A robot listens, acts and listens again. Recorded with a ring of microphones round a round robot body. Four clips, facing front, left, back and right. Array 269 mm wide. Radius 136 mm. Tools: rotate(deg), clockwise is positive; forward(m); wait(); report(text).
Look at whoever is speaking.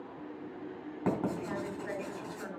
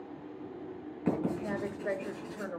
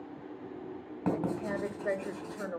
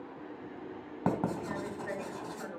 rotate(-145)
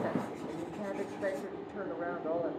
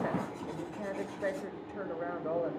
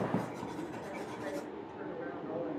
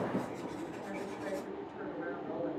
rotate(-45)
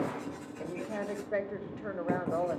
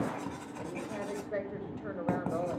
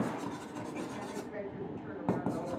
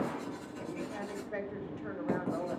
rotate(-10)
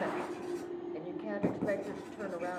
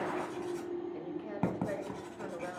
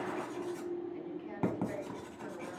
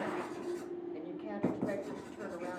report("Found it: a woman speaking, straight ahead, 1 to 2 m away.")